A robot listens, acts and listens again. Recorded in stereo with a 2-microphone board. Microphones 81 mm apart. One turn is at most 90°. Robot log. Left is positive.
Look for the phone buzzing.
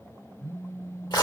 note: The phone buzzing: about 45° left or 135° left.
cmd yaw +45
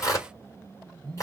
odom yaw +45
end: Facing the phone buzzing.